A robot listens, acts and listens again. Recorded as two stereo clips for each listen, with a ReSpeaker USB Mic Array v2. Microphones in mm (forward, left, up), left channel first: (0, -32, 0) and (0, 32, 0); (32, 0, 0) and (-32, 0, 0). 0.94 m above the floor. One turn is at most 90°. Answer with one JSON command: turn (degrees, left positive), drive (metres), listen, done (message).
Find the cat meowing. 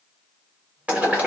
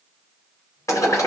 {"listen": true}
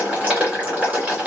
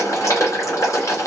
{"listen": true}
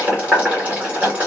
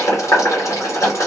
{"done": "I can't make out a cat meowing to turn to."}